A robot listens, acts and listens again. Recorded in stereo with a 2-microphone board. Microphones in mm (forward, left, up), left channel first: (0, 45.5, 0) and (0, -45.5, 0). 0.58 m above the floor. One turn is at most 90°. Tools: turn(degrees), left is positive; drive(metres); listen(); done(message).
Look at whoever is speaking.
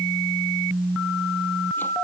listen()
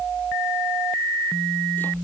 listen()
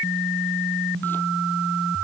done("I can't make out anyone speaking.")